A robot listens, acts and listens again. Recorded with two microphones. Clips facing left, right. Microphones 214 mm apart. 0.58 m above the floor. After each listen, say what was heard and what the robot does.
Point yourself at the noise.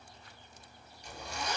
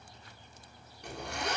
The zipper: about 75° right or 105° right. Turn 75° right.
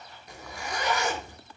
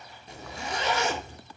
So it is at 25° right. Turn 25° right.
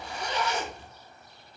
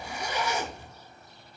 The zipper is now 10° right. Turn 10° right.
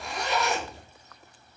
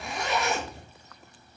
Facing the zipper.